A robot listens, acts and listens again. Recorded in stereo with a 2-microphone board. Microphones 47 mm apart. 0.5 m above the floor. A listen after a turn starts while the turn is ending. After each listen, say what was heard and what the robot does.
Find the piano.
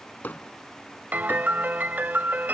The piano: about 40° right or 140° right. Turn 40° right.
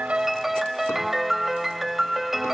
So it is at 10° right. Turn 10° right.
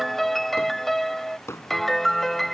Found it: a piano, straight ahead.